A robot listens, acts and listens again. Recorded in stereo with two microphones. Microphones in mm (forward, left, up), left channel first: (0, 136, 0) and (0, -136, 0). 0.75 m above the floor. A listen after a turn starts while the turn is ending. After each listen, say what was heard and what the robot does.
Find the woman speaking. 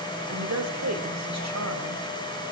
Turn 90° right.
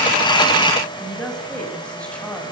Facing the woman speaking.